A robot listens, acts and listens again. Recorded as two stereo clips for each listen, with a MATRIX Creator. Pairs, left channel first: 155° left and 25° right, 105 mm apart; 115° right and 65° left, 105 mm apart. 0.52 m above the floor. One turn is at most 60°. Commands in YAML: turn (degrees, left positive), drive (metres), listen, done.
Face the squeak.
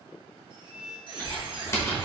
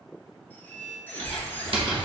turn: -45
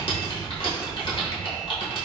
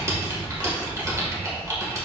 listen: true
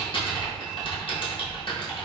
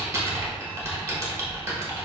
listen: true
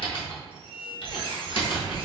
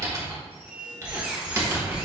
turn: -10
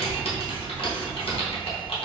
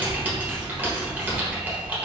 listen: true
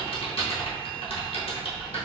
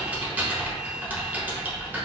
listen: true
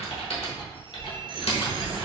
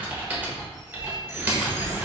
done: "I heard a squeak from this way, but can't make it out now."